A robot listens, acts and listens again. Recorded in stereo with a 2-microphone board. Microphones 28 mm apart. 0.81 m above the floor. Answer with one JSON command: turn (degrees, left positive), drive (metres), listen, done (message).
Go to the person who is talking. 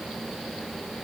{"listen": true}
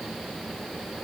{"listen": true}
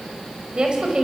{"turn": -35}
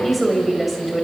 {"drive": 1.0}
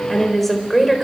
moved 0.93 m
{"drive": 1.0}
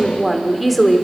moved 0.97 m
{"drive": 1.0}
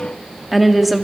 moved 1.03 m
{"drive": 1.0}
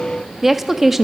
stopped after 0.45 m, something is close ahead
{"turn": -10}
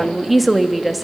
{"done": "Arrived at the woman speaking, straight ahead."}